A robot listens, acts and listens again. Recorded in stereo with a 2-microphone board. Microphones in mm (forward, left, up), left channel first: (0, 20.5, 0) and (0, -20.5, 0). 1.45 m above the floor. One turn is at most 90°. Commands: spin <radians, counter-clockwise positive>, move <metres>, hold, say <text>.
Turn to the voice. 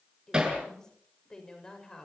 spin 0.52
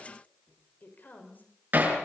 spin 1.57
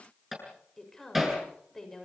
spin 0.17
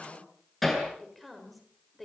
say Facing the woman speaking.